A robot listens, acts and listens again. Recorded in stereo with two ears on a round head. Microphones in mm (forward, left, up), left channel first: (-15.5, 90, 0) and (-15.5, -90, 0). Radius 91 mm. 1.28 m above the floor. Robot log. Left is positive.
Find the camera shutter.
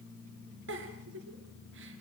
cmd idle
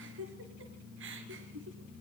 cmd idle
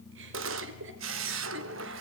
note: The camera shutter: about 65° right or 115° right.
cmd yaw -65
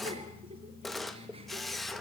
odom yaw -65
end: Found it: a camera shutter, straight ahead, 1 to 2 m away.